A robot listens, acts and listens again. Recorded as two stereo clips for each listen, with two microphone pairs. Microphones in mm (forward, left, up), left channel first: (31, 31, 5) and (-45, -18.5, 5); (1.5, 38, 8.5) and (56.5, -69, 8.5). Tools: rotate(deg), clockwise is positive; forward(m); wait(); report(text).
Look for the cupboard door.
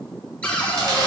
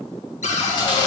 rotate(-110)
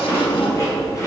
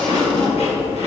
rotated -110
wait()
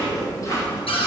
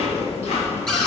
rotate(-30)
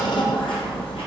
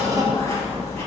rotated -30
report("Found it: a cupboard door, straight ahead, 1 to 2 m away.")